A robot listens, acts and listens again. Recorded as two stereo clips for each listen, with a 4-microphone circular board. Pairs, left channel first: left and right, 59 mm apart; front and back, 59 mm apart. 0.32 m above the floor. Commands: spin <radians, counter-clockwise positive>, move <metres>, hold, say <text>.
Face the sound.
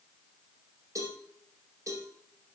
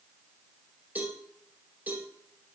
spin -2.09
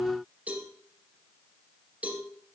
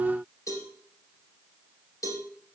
spin -0.44
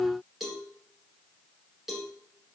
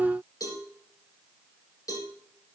say Facing the cowbell.